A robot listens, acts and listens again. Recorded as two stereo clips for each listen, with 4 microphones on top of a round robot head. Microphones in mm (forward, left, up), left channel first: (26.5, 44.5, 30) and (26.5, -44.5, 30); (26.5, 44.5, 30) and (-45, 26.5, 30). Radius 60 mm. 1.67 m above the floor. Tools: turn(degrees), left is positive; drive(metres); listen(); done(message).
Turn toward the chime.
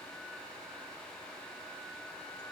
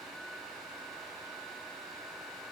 listen()
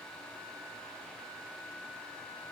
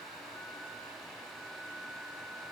listen()
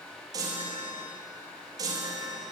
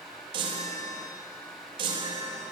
turn(degrees=-145)
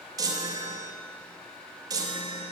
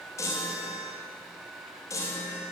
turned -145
turn(degrees=-45)
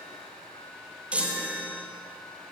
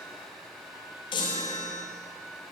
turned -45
turn(degrees=-15)
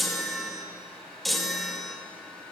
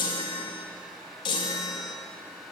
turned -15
done("Found it: a chime, straight ahead.")